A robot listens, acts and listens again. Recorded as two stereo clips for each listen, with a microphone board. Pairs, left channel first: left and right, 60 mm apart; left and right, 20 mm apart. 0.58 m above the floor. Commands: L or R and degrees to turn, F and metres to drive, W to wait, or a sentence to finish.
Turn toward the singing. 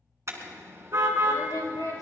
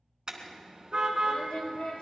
L90
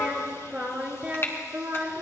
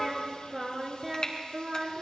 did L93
R40
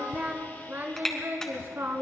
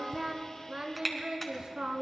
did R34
R40
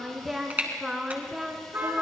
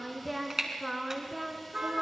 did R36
Found it: singing, straight ahead, 1 to 2 m away.